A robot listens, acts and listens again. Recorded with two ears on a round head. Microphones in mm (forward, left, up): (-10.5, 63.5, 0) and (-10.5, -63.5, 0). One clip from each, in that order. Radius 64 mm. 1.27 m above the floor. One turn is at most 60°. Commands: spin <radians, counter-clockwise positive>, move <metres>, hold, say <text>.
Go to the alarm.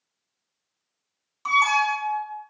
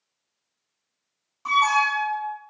spin 1.05
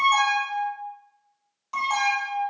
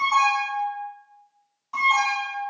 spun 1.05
spin 0.70
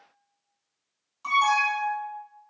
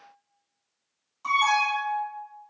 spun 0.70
spin 0.26
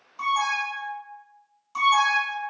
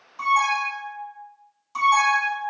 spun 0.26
move 1.0
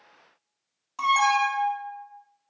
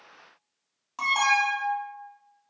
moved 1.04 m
spin -0.17
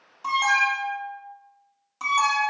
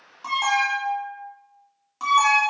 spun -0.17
move 1.0
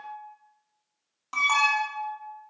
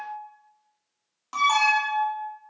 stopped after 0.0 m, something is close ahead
say Arrived at the alarm, straight ahead.